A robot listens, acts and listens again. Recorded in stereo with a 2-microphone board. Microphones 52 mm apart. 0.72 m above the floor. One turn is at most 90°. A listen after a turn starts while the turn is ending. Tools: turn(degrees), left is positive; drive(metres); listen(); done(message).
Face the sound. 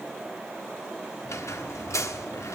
turn(degrees=75)
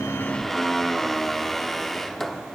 done("Found it: a squeak, straight ahead, 1 to 2 m away.")